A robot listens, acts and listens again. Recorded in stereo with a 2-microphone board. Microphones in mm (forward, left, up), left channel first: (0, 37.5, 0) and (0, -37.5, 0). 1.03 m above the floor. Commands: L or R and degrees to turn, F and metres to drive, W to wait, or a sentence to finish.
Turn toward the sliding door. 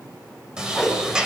R30
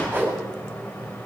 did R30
L20
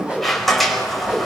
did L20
Facing the sliding door.